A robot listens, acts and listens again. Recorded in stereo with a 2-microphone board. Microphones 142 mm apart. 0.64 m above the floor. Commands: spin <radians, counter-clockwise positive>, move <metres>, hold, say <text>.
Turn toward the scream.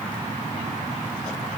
hold
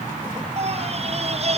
spin -0.79
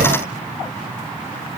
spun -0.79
hold
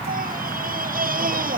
spin -1.48
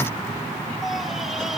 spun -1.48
hold
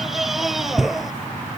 say Facing the scream.